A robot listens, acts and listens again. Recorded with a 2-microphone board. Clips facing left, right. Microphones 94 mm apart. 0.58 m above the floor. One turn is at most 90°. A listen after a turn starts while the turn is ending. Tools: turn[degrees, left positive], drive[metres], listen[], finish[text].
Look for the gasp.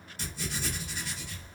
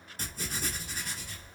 Action: listen[]
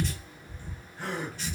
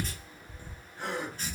Thought: The gasp: about 20° right or 160° right.
Action: turn[-20]
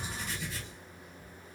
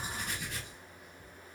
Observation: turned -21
Action: listen[]
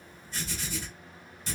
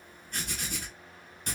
Action: finish[I heard a gasp, but can't make it out now. It was about straight ahead or 140° right.]